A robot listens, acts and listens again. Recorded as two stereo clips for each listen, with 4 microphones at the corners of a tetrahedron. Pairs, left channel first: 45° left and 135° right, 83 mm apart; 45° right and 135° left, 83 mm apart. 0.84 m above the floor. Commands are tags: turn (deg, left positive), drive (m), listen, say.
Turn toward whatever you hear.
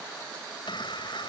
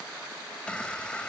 <turn deg="30"/>
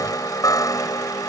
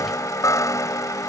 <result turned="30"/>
<say>Facing the chime.</say>